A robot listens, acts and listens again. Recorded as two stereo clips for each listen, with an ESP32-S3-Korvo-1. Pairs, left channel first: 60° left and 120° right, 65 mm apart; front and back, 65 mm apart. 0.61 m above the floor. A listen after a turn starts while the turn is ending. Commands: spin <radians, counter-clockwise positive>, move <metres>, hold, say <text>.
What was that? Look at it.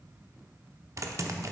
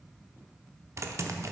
spin -2.53
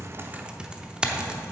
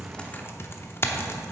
spin -0.79
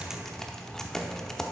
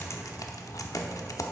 spin -0.35
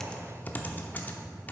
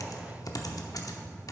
say Facing the typing on a keyboard, under 1 m away.